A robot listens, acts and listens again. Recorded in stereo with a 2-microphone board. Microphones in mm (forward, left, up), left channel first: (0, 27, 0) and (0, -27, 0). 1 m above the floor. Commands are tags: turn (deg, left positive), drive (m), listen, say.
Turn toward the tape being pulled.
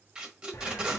<turn deg="-15"/>
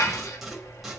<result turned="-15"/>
<listen/>
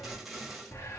<say>Found it: tape being pulled, straight ahead, 1 to 2 m away.</say>